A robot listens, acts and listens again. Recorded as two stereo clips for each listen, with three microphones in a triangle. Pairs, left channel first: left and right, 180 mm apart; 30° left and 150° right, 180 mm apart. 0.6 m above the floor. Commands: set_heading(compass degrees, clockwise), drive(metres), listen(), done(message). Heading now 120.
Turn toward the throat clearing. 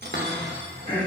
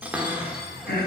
set_heading(90)
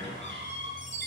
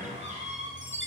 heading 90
listen()
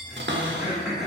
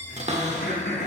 done("Found it: throat clearing, straight ahead, 2 to 4 m away.")